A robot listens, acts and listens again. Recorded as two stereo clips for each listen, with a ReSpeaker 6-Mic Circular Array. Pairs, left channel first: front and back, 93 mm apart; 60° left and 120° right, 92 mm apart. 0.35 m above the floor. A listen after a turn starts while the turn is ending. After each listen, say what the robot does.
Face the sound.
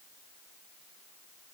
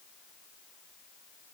Keep listening.
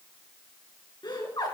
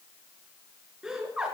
Turn 40° right.
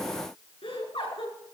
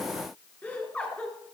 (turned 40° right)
Turn 15° right.
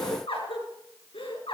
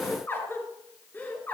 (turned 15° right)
Turn 10° right.
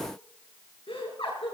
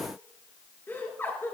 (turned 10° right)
Found it: laughter, straight ahead.